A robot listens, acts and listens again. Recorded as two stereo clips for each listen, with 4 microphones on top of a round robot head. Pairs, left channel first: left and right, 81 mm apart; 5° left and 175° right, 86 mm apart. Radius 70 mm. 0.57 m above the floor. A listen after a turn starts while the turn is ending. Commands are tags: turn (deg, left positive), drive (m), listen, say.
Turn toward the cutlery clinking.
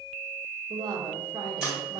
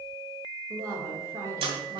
<turn deg="-175"/>
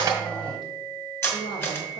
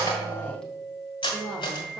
<turn deg="30"/>
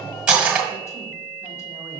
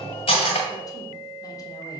<turn deg="-10"/>
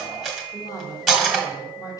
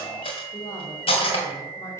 <say>Facing the cutlery clinking, 1 to 2 m away.</say>